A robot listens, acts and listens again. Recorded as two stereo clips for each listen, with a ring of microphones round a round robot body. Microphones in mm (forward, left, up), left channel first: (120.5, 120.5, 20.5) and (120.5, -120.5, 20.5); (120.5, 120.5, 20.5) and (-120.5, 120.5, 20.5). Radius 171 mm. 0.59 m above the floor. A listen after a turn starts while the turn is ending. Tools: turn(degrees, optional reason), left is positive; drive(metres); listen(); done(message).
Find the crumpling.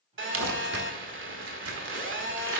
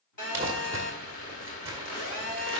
turn(degrees=-100, reason="The crumpling: 100° right.")
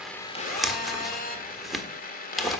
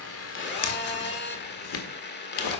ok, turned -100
done("Found it: crumpling, straight ahead.")